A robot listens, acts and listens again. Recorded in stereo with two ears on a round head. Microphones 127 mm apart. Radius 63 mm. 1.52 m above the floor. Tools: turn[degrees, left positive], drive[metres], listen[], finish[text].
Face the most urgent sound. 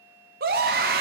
Thought: The scream: about 65° right or 115° right.
Action: turn[-65]
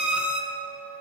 Action: finish[Found it: a scream, straight ahead.]